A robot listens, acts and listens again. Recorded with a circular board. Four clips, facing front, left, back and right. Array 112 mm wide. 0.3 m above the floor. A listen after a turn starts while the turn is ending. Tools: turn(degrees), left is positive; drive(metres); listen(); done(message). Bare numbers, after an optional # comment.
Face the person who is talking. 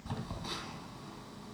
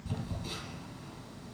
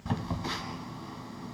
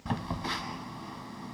listen()
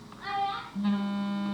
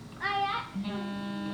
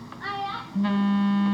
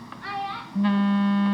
# The child speaking: 110° left.
turn(110)
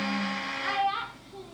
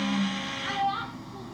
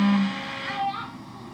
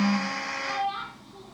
# The child speaking is now 10° left.
turn(10)
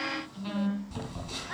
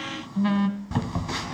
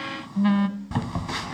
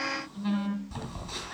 listen()
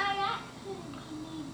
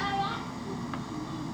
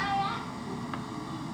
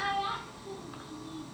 listen()
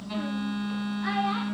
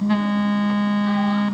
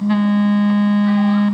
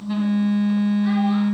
done("Facing where the child speaking came from. I can't hear it now.")